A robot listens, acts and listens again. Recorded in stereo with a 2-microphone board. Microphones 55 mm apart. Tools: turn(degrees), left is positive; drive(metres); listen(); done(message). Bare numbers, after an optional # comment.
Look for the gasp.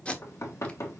listen()
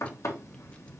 listen()
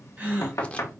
# The gasp: about 30° right or 150° right.
turn(-30)
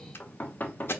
listen()
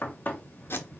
done("I heard a gasp, but can't make it out now. It was about straight ahead or 120° right.")